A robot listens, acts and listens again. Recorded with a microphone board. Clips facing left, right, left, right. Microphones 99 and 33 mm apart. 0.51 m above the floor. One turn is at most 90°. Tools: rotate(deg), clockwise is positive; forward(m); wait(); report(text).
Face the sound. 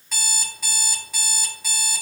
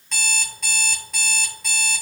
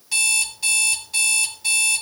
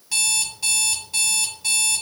rotate(-30)
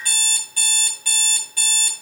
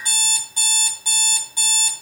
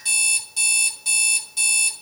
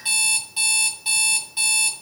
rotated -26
rotate(25)
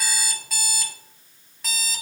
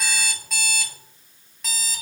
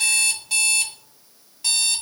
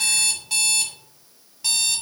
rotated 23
report("Facing the alarm clock, 1 to 2 m away.")